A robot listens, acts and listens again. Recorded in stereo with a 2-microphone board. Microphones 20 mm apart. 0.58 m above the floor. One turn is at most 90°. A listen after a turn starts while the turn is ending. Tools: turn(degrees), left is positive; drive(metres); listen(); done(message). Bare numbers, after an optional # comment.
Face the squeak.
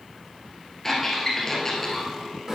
# The squeak: about 20° left or 160° left.
turn(20)
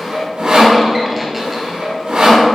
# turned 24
listen()
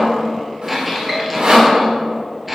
done("Found it: a squeak, straight ahead.")